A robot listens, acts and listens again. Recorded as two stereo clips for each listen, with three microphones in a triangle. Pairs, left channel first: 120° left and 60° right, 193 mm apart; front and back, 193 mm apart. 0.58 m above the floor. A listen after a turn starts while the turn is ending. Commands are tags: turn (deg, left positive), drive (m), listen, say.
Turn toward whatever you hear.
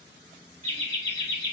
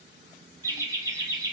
<turn deg="-110"/>
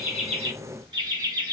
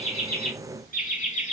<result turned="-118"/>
<say>Found it: laughter, straight ahead, 1 to 2 m away.</say>